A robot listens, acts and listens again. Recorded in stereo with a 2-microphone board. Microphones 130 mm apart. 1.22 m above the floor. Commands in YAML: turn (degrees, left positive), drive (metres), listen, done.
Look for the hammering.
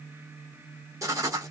listen: true
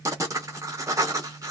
listen: true
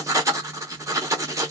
done: "I can't make out hammering to turn to."